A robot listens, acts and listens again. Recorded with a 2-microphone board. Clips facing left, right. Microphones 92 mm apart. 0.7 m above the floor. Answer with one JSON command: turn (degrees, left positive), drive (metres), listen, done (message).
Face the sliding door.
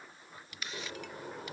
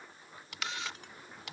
{"turn": 75}
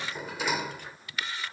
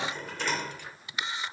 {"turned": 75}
{"turn": 10}
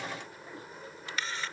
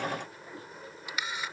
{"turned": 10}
{"done": "Found it: a sliding door, straight ahead."}